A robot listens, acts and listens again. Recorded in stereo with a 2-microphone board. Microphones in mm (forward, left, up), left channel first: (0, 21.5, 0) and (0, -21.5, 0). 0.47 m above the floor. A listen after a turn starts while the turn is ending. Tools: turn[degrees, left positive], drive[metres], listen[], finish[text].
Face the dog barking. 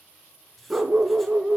Action: turn[-30]
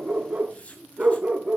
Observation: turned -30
Thought: The dog barking: about 20° right or 160° right.
Action: turn[-20]
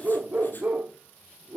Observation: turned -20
Thought: So it is at 155° right.
Action: turn[-155]
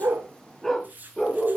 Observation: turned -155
Thought: The dog barking is now 10° left.
Action: turn[10]
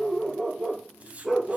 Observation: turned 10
Action: finish[Facing the dog barking, 2 to 4 m away.]